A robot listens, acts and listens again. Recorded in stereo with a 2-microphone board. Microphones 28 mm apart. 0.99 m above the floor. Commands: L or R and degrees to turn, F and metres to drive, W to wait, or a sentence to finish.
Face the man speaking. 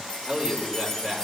R40
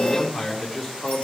Found it: a man speaking, straight ahead.